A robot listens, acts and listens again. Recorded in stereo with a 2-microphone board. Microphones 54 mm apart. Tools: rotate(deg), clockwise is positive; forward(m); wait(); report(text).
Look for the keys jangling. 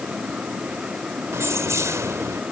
rotate(65)
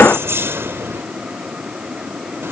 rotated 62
rotate(50)
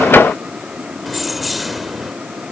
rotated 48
report("Facing the keys jangling.")